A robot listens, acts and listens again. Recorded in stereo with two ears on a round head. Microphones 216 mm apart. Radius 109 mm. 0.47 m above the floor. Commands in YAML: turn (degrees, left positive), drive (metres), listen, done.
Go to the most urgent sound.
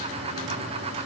listen: true
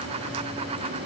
listen: true
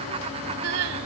turn: -70
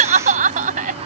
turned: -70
turn: -35
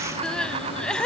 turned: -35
drive: 1.0
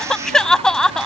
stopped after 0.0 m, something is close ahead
done: "Blocked. The crying is further on, straight ahead."